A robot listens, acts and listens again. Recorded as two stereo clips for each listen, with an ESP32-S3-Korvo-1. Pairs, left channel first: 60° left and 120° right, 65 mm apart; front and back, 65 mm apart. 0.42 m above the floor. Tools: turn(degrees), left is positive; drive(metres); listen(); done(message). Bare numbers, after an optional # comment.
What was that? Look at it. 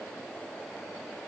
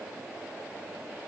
listen()
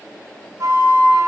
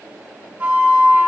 # The flute: 115° right.
turn(-115)
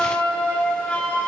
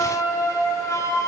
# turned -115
# The flute is now 10° right.
turn(-10)
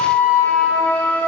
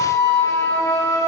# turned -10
done("Facing the flute.")